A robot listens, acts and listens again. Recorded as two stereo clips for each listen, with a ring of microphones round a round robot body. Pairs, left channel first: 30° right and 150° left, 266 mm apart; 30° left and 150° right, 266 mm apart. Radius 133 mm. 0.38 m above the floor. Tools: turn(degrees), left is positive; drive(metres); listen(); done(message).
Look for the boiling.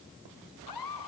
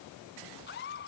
listen()
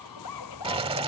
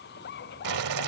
turn(degrees=-140)
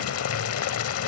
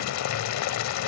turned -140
done("Found it: boiling, straight ahead.")